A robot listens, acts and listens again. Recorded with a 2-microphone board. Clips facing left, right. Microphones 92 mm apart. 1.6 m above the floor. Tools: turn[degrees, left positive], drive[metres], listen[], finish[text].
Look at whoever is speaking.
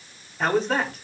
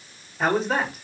Action: turn[30]
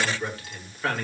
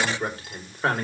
Thought: So it is at 30° right.
Action: turn[-30]
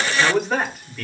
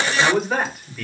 Action: finish[Facing the man speaking.]